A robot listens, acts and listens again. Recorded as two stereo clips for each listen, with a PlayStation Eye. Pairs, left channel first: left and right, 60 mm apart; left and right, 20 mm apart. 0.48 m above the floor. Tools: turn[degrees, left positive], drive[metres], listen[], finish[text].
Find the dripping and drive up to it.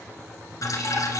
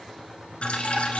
Thought: The dripping: about 65° left or 115° left.
Action: turn[65]
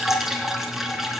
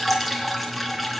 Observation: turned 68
Action: drive[1.0]
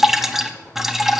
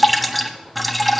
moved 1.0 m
Action: drive[1.0]
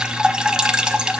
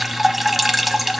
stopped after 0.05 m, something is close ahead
Thought: The dripping is now 15° right.
Action: turn[-15]
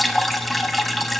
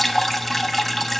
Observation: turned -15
Action: finish[Arrived at the dripping, straight ahead.]